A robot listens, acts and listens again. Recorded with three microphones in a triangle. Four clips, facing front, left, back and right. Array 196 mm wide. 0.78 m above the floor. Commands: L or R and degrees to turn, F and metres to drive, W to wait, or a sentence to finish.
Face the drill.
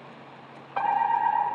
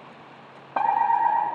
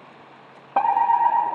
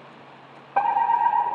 W
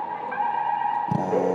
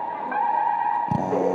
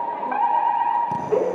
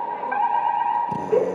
L60
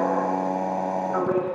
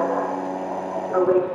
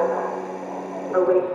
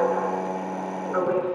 Facing the drill, 2 to 4 m away.